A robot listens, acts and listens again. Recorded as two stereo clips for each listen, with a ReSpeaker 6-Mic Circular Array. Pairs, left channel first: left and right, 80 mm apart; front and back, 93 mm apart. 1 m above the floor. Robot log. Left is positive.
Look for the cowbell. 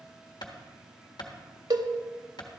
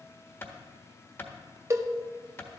note: The cowbell: 125° right.
cmd yaw -125
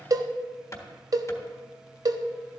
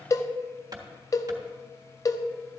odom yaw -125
note: The cowbell is now 50° right.
cmd yaw -50
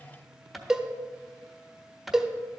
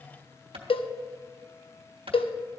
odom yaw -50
note: The cowbell is now 10° right.
cmd yaw -10
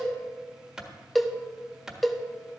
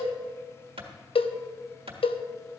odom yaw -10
end: Facing the cowbell.